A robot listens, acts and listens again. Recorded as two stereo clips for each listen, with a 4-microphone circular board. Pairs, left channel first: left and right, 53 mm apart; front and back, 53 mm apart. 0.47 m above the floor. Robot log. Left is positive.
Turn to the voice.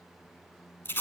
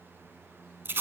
cmd idle
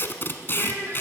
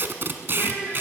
note: The child speaking: 55° right.
cmd yaw -55
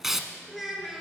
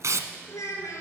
end: Facing the child speaking, over 4 m away.